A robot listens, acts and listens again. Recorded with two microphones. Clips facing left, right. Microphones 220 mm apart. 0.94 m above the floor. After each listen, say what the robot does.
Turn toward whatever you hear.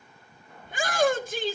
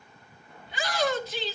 Turn 50° left.
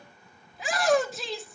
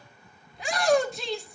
Found it: a shout, straight ahead, 1 to 2 m away.